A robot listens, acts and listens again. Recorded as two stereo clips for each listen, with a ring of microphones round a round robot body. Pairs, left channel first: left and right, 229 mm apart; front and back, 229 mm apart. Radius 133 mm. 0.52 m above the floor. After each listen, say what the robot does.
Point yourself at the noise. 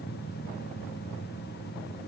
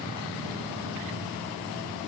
Keep listening.
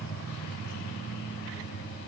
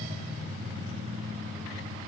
Keep listening.
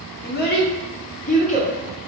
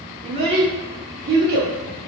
Turn 140° left.
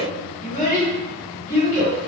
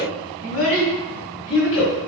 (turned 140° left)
Turn 15° left.
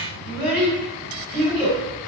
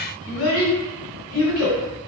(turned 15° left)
Found it: a child speaking, straight ahead, 1 to 2 m away.